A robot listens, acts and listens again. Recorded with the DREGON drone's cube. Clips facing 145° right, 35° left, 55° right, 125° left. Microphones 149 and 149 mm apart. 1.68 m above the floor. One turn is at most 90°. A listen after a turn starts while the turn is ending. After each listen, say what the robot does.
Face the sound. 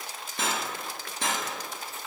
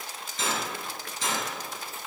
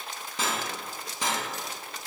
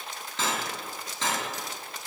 Turn 90° right.
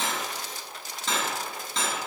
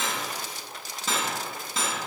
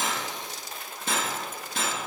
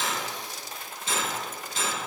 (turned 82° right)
Turn 50° right.
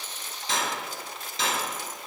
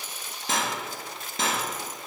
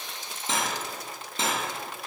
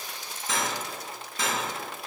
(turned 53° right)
Found it: cutlery clinking, straight ahead.